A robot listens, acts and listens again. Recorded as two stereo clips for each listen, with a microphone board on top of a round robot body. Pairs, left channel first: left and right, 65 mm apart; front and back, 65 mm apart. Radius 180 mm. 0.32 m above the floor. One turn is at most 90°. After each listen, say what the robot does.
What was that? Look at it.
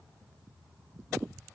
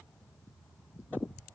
Keep listening.
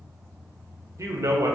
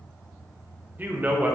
Turn 90° right.
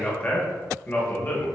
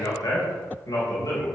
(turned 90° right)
Turn 35° left.
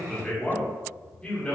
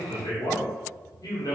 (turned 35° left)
Turn 20° left.
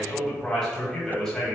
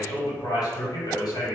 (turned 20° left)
Turn 10° left.
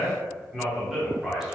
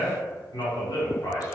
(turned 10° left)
Found it: a man speaking, straight ahead.